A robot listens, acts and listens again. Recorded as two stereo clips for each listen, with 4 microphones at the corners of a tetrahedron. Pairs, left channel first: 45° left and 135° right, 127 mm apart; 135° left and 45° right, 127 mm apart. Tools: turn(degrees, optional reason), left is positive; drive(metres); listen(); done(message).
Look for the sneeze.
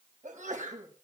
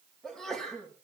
turn(degrees=-140, reason="The sneeze: 140° right.")
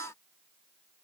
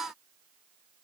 done("Facing where the sneeze came from. I can't hear it now.")